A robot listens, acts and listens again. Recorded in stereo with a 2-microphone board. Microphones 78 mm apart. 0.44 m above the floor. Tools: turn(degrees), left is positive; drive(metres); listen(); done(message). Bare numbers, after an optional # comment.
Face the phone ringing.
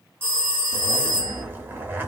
# The phone ringing: about 30° right or 150° right.
turn(-30)
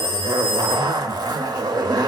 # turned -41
# So it is at 10° left.
turn(10)
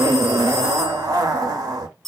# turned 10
done("Found it: a phone ringing, straight ahead, 1 to 2 m away.")